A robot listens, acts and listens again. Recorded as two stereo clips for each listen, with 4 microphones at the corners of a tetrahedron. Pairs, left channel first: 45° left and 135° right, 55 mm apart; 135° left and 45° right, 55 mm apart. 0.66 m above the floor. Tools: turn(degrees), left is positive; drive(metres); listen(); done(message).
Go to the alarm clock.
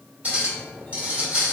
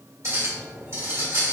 listen()
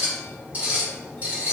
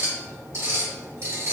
listen()
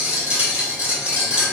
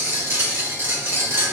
done("I can't make out an alarm clock to turn to.")